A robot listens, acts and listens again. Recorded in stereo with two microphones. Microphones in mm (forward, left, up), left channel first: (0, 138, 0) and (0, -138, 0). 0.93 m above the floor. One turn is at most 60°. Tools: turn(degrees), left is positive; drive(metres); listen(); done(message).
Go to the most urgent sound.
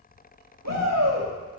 turn(degrees=-60)
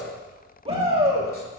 turn(degrees=-20)
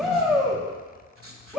drive(metres=1.0)
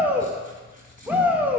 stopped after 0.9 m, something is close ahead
done("Arrived at the shout, straight ahead.")